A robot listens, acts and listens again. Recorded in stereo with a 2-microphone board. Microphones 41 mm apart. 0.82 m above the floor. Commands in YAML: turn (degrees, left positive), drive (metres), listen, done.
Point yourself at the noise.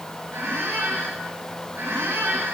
turn: -70
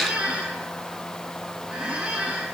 turn: -25
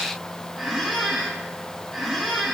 done: "Found it: a squeak, straight ahead."